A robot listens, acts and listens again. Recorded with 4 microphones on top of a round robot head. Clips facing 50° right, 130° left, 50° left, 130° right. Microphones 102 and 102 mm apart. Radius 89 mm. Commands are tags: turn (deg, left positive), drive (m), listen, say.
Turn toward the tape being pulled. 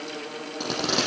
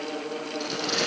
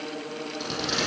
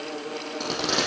<turn deg="-85"/>
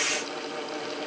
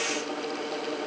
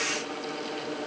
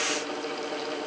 <listen/>
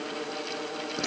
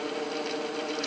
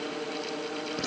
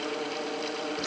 <listen/>
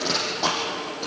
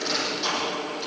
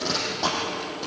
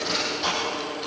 <say>Found it: tape being pulled, straight ahead.</say>